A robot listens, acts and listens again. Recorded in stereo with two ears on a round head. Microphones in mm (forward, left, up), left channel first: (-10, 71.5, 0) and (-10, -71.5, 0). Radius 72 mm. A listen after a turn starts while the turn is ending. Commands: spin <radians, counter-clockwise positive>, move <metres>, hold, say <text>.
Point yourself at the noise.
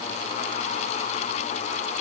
hold
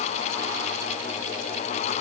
hold
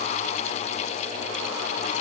say I can't make out anything.